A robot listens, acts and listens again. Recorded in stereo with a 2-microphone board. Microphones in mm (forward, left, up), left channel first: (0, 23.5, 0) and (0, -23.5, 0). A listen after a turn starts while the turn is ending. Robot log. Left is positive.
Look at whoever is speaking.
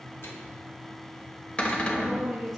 cmd yaw +30
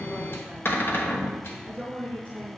note: So it is at 140° left.
cmd yaw +140
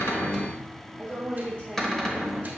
note: The woman speaking is now 20° left.
cmd yaw +20
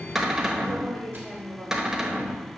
end: Found it: a woman speaking, straight ahead.